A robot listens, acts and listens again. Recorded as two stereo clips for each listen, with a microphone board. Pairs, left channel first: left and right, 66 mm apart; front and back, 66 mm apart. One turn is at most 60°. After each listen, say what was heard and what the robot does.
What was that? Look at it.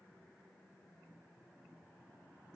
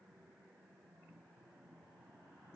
Keep listening.
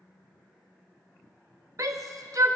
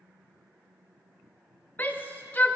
The shout: 60° right. Turn 60° right.
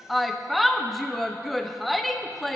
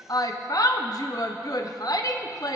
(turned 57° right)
Facing the shout, under 1 m away.